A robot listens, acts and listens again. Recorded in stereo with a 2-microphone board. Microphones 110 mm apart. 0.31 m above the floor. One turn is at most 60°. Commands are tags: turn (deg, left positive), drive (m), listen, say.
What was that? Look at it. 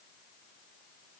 <listen/>
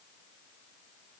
<listen/>
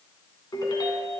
<turn deg="40"/>
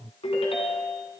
<turn deg="60"/>
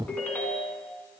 <turn deg="20"/>
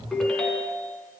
<say>Facing the ringtone, 2 to 4 m away.</say>